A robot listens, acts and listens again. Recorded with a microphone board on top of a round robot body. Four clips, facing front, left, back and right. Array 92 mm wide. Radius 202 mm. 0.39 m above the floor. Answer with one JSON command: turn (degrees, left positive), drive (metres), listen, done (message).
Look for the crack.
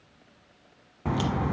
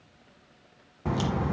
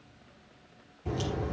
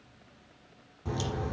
{"turn": 30}
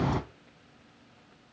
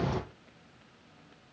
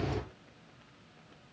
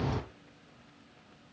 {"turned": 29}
{"done": "Facing the crack."}